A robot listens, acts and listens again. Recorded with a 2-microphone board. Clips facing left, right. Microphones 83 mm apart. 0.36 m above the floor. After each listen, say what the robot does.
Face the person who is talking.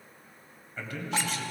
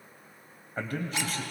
Turn 45° right.
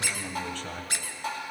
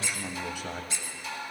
Turn 10° right.
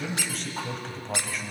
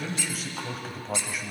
Found it: a man speaking, straight ahead, 1 to 2 m away.